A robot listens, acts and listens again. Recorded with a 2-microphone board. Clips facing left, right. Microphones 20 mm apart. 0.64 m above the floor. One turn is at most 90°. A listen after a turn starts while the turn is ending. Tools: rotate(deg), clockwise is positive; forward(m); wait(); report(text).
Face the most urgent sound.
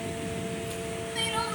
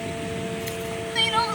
rotate(30)
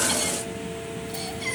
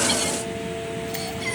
report("Facing the crying.")